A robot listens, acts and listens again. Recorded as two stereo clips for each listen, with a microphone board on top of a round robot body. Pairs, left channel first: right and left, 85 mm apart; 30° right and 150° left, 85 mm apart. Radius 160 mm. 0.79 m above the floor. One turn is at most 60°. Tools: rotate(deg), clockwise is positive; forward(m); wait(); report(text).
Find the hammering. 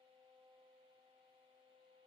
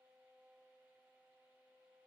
wait()
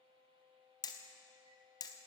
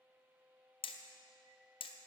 rotate(45)
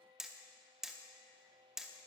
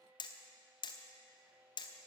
report("Found it: hammering, straight ahead, under 1 m away.")